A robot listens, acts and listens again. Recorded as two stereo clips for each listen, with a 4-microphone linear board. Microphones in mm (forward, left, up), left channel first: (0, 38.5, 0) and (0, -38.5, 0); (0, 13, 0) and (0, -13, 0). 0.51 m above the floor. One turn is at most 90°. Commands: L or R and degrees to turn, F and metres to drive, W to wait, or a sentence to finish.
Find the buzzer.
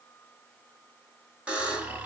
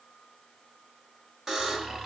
R30
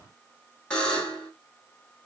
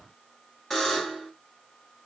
L15
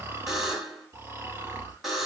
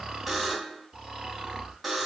Facing the buzzer, 1 to 2 m away.